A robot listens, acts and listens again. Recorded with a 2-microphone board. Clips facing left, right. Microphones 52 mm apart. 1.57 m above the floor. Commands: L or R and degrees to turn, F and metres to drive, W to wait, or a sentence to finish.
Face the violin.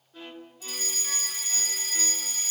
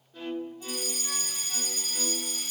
L30
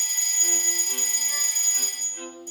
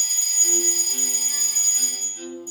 L135
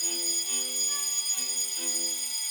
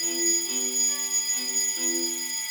W
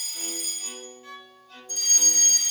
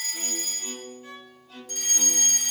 R10
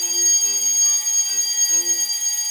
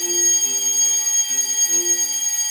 W
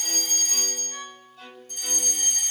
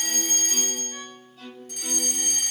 Found it: a violin, straight ahead.